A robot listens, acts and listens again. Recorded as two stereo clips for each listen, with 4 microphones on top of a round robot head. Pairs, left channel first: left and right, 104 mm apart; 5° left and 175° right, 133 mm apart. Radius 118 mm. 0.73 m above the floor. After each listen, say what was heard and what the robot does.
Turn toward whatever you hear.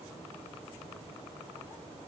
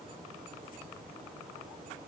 Keep listening.
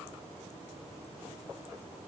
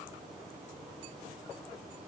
Keep listening.
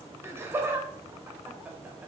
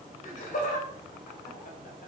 The laughter: 15° right. Turn 15° right.
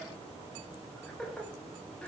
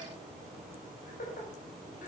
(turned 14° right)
The laughter is now 10° left. Turn 10° left.
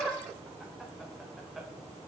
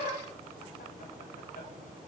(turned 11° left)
Facing the laughter.